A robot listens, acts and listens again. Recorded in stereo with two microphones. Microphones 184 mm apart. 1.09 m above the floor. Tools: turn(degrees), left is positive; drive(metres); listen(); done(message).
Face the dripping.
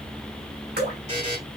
turn(degrees=-60)
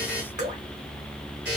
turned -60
turn(degrees=-50)
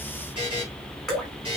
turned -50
done("Found it: dripping, straight ahead, 2 to 4 m away.")